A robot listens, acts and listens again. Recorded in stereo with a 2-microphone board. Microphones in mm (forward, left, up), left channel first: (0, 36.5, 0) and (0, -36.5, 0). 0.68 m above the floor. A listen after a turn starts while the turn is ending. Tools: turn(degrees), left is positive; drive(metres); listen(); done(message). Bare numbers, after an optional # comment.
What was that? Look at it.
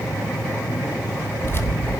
# The keys jangling: about 35° left or 145° left.
turn(35)
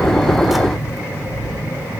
done("Facing the keys jangling, 1 to 2 m away.")